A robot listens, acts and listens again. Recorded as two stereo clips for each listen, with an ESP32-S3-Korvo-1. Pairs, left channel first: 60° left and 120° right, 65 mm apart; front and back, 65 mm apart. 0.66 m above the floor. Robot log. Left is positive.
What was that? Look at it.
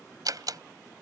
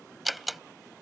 note: The door slam: 95° right.
cmd yaw -95
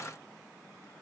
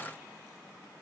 end: Facing where the door slam came from. I can't hear it now.